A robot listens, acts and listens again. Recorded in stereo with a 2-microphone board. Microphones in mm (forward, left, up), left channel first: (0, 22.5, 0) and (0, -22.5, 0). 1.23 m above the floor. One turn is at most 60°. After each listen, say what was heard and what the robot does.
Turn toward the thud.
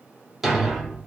Turn 30° right.
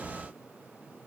Keep listening.
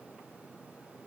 I heard a thud, but can't make it out now. It was about 25° left or 145° right.